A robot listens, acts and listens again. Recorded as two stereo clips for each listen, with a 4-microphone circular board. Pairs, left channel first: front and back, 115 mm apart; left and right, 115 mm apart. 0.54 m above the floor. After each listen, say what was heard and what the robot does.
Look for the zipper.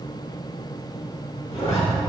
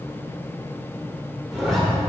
Found it: a zipper, straight ahead.